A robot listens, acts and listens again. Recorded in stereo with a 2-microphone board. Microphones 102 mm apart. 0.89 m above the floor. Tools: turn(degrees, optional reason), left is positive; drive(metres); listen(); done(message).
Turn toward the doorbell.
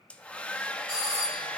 turn(degrees=-35, reason="The doorbell: about 35° right or 145° right.")
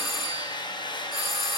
done("Found it: a doorbell, straight ahead.")